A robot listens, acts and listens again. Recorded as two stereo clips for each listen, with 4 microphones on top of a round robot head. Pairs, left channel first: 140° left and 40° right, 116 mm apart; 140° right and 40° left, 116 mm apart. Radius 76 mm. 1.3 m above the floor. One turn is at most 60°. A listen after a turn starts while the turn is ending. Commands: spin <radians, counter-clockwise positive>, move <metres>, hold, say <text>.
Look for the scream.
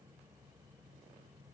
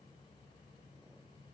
hold
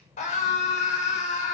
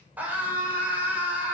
spin 1.05
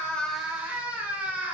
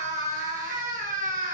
spin 0.70
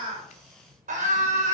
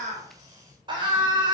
spin -0.26
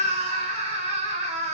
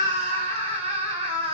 say Found it: a scream, straight ahead.